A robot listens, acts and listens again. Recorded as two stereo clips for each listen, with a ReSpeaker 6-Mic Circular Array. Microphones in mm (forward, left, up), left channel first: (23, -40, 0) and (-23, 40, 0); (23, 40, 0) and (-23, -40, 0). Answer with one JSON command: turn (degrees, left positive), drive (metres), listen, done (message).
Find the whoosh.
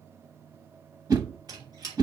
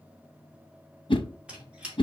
{"turn": 75}
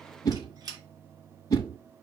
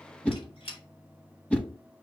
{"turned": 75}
{"turn": -15}
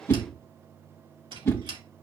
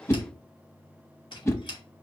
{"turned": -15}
{"done": "Facing the whoosh, under 1 m away."}